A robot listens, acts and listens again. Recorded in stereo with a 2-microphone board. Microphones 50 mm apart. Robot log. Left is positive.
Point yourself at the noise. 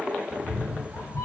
note: The cat meowing: about 65° left or 115° left.
cmd yaw +65
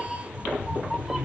note: So it is at 15° right.
cmd yaw -15
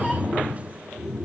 note: The cat meowing is now 20° right.
cmd yaw -20
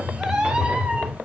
note: The cat meowing is now 30° right.
cmd yaw -30
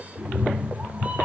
note: The cat meowing is now 35° right.
cmd yaw -35
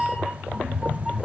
end: Found it: a cat meowing, straight ahead.